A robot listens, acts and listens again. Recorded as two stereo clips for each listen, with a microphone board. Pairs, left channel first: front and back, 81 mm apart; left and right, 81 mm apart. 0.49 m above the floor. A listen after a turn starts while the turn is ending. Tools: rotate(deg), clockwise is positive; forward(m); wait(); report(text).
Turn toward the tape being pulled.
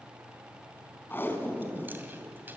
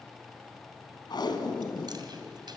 rotate(-65)
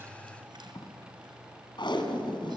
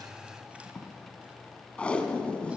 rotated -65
rotate(-10)
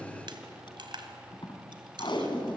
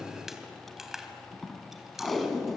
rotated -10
report("Facing the tape being pulled.")